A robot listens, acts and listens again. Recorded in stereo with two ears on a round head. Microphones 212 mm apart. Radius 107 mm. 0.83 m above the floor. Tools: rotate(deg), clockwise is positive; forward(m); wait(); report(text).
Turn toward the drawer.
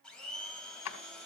rotate(-90)
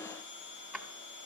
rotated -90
report("Facing the drawer, 1 to 2 m away.")